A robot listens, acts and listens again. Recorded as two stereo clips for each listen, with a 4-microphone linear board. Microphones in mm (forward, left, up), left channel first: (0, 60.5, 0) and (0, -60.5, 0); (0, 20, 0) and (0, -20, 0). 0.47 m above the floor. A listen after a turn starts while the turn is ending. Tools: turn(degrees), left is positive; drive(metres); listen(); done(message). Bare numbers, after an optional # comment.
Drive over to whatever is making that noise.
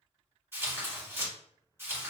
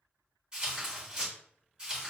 # The tearing paper: about 20° right or 160° right.
turn(-20)
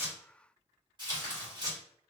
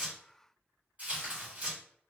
# So it is at 135° right.
turn(-135)
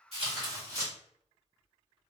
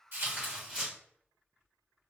# The tearing paper is now 30° right.
turn(-30)
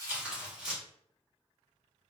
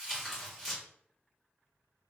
drive(1.0)
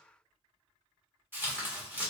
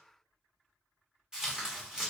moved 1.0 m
# The tearing paper is now 25° right.
turn(-25)
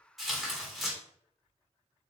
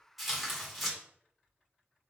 drive(1.0)
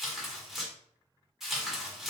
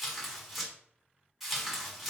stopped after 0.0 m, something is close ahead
done("Arrived at the tearing paper, straight ahead.")